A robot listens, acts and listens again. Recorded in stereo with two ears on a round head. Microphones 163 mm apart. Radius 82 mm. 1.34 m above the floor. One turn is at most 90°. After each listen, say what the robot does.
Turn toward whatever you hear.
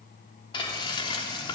Turn 25° left.
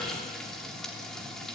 Facing the frying.